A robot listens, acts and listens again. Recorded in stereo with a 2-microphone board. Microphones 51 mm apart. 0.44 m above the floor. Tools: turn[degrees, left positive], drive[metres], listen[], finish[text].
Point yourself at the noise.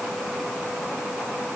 Action: listen[]
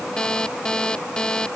Thought: The alarm clock: about 15° left or 165° left.
Action: turn[15]
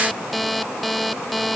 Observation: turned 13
Action: finish[Found it: an alarm clock, straight ahead.]